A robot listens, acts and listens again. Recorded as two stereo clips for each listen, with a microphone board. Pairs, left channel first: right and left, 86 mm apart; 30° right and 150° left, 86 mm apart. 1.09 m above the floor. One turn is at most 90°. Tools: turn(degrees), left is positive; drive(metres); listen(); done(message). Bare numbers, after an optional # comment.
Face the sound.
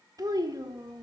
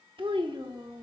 # The child speaking: 125° left.
turn(90)
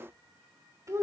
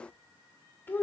# The child speaking is now 35° left.
turn(35)
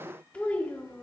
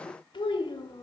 # The child speaking is now 20° right.
turn(-20)
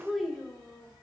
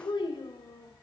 done("Found it: a child speaking, straight ahead, 2 to 4 m away.")